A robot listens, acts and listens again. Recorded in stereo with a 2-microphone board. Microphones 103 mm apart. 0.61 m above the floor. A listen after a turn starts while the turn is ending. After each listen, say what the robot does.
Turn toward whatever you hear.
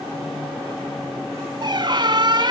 Turn 45° right.
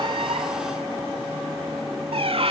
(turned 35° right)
Turn 95° right.
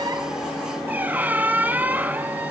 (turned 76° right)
Turn 20° right.
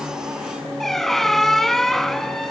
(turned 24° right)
Facing the squeak.